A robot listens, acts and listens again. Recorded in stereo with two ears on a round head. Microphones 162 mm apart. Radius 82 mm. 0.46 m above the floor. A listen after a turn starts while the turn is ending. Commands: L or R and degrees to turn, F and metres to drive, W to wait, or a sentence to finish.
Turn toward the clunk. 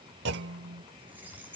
R65
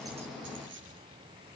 W
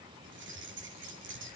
I heard a clunk, but can't make it out now. It was about straight ahead or 50° right.